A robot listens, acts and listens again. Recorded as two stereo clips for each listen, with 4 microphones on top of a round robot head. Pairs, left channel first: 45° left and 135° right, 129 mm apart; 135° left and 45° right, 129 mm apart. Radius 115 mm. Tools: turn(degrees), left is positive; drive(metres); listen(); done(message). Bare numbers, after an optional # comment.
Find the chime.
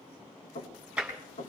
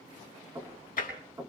listen()
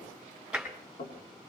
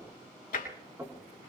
listen()
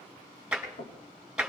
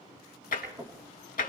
done("I can't make out a chime to turn to.")